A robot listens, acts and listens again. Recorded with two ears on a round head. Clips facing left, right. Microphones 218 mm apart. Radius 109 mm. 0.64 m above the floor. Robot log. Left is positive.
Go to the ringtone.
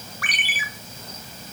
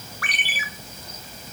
cmd yaw +90
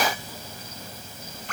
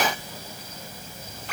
cmd fwd 1.0
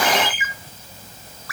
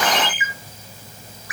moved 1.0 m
note: The ringtone is now 15° right.
cmd yaw -15
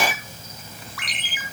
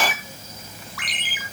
cmd fwd 1.0
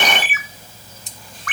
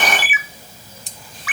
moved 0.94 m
cmd fwd 1.0
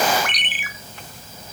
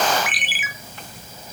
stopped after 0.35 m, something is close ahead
end: I am next to the ringtone.